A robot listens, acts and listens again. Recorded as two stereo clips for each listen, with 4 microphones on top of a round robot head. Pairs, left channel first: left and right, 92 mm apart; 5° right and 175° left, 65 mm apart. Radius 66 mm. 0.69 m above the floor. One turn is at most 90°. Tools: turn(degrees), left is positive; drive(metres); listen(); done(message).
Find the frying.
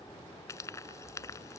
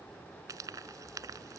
turn(degrees=90)
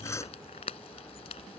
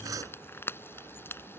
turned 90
turn(degrees=50)
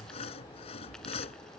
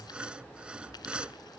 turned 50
listen()
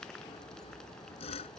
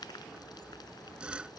done("Found it: frying, straight ahead.")